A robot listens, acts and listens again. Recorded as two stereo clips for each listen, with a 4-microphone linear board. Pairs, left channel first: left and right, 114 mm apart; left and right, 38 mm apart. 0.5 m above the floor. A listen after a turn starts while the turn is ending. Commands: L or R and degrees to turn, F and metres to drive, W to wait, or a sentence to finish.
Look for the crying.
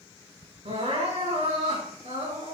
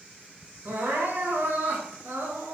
R65
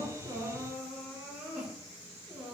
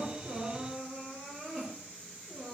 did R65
Facing the crying.